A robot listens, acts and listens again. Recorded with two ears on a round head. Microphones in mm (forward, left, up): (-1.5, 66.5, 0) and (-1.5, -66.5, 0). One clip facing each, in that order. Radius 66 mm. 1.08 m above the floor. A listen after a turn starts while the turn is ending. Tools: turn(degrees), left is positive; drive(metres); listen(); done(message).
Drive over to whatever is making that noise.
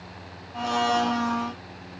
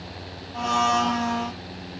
turn(degrees=30)
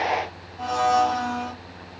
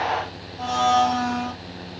turn(degrees=-25)
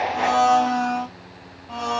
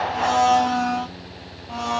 turn(degrees=-10)
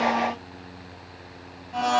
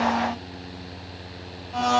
drive(metres=1.0)
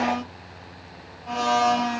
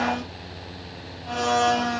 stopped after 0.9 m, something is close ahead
done("I am next to the blender.")